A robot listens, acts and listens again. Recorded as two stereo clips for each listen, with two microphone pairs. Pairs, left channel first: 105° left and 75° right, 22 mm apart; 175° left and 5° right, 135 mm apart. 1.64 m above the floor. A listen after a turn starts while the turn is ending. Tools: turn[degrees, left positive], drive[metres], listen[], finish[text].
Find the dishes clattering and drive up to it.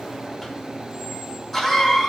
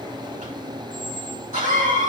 Action: listen[]
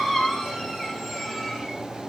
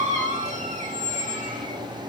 Action: listen[]
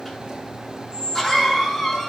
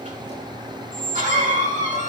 Action: finish[I can't make out dishes clattering to turn to.]